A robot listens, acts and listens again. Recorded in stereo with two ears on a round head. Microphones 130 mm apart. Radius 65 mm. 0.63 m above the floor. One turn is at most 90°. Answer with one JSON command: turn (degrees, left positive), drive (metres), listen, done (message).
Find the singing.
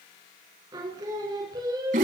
{"turn": -25}
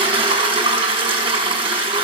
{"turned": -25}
{"listen": true}
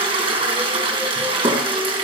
{"listen": true}
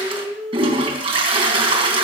{"done": "Facing the singing."}